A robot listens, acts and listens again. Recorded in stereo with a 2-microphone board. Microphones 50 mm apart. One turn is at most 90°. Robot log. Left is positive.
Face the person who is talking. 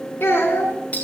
note: The child speaking: about 50° left or 130° left.
cmd yaw +50
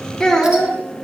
note: So it is at 10° left.
cmd yaw +10
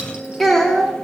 end: Found it: a child speaking, straight ahead.